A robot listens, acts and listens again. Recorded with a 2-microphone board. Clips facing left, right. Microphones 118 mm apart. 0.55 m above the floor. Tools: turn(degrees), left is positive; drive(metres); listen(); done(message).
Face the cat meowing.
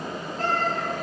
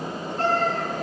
turn(degrees=-75)
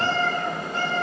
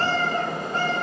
turn(degrees=-45)
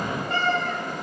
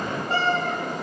turn(degrees=-35)
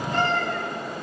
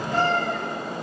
turn(degrees=-10)
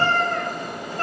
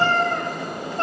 turn(degrees=-25)
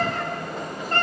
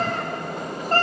turn(degrees=-35)
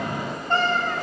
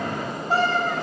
done("Found it: a cat meowing, straight ahead.")